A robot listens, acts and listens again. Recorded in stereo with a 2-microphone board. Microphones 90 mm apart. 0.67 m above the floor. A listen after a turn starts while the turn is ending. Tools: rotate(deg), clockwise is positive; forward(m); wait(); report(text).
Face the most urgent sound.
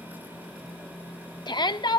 rotate(-55)
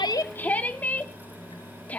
rotate(-20)
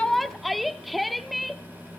report("Facing the shout.")